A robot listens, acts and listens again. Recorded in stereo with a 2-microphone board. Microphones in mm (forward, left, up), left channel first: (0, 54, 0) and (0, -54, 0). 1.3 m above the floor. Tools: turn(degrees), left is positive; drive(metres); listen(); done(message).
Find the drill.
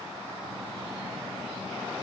listen()
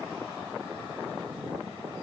listen()
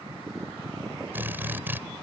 turn(degrees=-20)
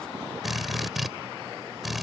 done("Facing the drill.")